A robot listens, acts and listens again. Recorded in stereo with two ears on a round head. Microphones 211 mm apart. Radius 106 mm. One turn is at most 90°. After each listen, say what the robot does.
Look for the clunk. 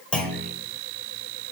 Turn 30° left.
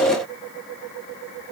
Keep listening.
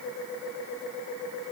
I heard a clunk, but can't make it out now. It was about 25° right or 145° left.